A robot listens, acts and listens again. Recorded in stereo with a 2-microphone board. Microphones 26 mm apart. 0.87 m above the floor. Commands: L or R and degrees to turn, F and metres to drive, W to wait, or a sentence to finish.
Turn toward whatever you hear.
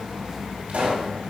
R70
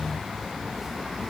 W
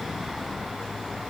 I heard a pop, but can't make it out now. It was about straight ahead or 40° right.